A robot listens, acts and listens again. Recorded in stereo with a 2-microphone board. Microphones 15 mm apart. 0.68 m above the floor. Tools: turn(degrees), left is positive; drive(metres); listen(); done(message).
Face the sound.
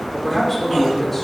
turn(degrees=25)
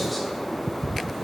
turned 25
listen()
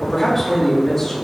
turn(degrees=25)
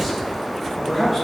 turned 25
turn(degrees=30)
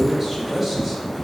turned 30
turn(degrees=-15)
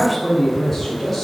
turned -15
done("Found it: a man speaking, straight ahead.")